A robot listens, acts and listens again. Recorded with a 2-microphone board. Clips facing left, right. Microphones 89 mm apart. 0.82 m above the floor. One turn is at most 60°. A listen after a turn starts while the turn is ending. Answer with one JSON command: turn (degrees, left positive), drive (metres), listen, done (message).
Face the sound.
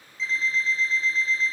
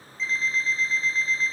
{"turn": 30}
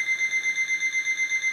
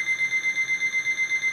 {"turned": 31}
{"turn": 60}
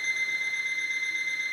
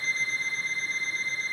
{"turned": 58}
{"turn": 60}
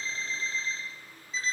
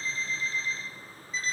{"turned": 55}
{"turn": 30}
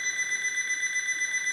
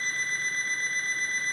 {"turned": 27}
{"done": "Facing the alarm clock, under 1 m away."}